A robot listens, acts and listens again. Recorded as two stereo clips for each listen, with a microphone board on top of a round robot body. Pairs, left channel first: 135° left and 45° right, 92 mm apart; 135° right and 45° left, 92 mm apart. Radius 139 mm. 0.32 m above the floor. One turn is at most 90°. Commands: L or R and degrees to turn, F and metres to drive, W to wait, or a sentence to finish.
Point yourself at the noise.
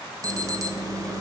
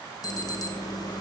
R90
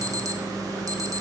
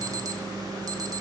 Found it: an alarm, straight ahead.